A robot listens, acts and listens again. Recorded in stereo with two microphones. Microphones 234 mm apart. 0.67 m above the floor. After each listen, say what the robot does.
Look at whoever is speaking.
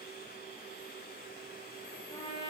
Keep listening.
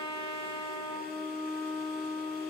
Keep listening.
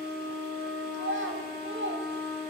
Turn 60° right.
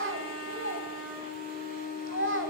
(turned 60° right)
Turn 60° right.
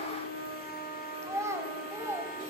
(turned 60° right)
Turn 10° right.
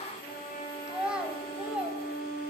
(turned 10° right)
Facing the child speaking.